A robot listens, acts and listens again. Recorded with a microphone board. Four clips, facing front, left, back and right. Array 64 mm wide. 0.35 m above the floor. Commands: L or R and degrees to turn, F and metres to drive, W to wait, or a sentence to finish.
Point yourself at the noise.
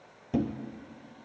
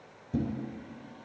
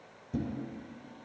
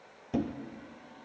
R40
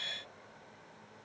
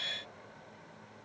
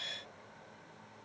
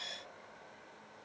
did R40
Facing where the thud came from. I can't hear it now.